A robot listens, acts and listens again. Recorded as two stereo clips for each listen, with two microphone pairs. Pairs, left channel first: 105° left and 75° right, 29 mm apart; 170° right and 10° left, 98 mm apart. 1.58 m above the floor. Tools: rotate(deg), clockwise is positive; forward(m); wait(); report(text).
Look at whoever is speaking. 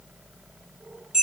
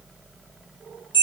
wait()
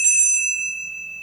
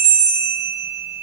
wait()
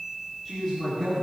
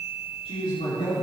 rotate(175)
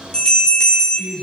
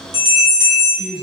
rotate(-25)
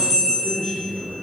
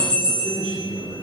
report("Facing the man speaking, over 4 m away.")